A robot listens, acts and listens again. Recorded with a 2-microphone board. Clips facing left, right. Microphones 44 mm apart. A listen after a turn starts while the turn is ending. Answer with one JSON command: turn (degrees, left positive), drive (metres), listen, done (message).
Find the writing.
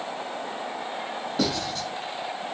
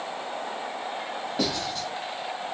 {"turn": -30}
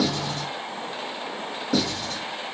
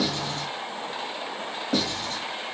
{"turn": -140}
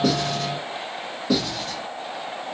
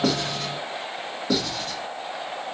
{"done": "Facing the writing, 1 to 2 m away."}